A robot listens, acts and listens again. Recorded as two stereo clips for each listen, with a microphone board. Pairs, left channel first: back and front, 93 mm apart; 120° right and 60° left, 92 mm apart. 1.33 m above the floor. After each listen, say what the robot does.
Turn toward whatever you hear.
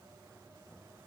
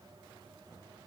Keep listening.
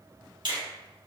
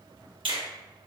Turn 30° left.
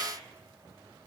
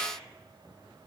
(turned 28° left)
Keep listening.
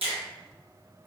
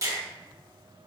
Facing the finger snap, 1 to 2 m away.